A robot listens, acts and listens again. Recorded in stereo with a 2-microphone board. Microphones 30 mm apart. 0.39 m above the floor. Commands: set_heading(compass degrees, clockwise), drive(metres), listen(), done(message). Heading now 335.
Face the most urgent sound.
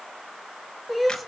set_heading(5)
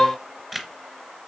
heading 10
set_heading(340)
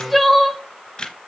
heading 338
done("Found it: crying, straight ahead.")